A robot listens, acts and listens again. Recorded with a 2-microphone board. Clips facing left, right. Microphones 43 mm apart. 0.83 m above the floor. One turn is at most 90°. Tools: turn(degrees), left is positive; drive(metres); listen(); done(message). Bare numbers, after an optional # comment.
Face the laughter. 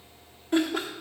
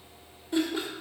# The laughter: about 60° left or 120° left.
turn(60)
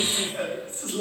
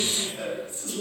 # So it is at 45° left.
turn(45)
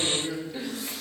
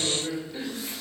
done("Facing the laughter, 2 to 4 m away.")